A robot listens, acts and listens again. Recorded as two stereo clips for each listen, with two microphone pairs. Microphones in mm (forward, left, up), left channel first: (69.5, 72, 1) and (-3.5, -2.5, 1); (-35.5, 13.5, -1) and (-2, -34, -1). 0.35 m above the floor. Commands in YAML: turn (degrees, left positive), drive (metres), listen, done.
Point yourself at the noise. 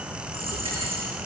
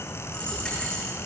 turn: -160
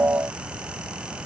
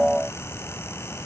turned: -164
done: "I heard a dropped coin from this way, but can't make it out now."